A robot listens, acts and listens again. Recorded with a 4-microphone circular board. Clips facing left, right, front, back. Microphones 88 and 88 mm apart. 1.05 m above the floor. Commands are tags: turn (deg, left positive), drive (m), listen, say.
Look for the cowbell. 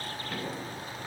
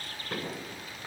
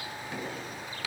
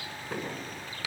<listen/>
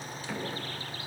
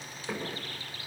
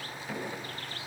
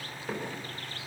<listen/>
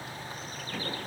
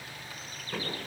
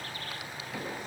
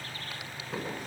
<say>I can't make out a cowbell, only knocking.</say>